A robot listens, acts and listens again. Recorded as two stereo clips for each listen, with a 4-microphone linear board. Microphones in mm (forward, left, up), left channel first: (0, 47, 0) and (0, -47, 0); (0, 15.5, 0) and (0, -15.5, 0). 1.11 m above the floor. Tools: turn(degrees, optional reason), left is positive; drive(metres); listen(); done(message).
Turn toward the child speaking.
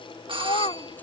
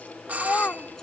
turn(degrees=90)
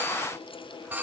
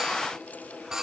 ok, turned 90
listen()
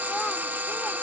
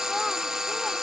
listen()
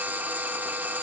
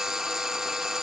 done("Facing where the child speaking came from. I can't hear it now.")